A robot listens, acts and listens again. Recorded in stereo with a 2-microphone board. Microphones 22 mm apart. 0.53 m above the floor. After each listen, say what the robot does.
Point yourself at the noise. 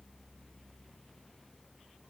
Keep listening.
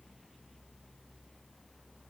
Keep listening.
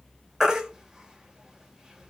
Turn 25° right.
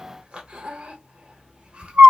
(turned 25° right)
Turn 125° right.
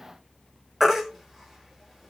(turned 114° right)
Turn 10° right.
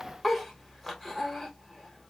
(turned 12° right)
Facing the baby crying, under 1 m away.